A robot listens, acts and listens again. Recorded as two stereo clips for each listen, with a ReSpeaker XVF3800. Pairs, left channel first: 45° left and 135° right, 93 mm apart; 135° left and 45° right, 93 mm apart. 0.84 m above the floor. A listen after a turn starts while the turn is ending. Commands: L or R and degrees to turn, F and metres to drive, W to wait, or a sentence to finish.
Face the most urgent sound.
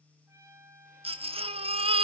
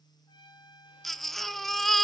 R135
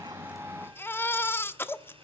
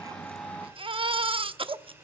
R20
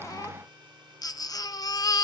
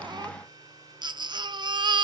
Found it: a baby crying, straight ahead.